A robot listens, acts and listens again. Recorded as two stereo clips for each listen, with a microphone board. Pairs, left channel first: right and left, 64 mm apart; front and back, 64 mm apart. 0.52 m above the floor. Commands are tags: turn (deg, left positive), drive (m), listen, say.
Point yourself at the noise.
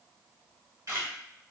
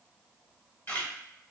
<turn deg="55"/>
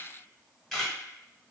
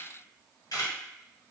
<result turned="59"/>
<say>Facing the camera shutter, 1 to 2 m away.</say>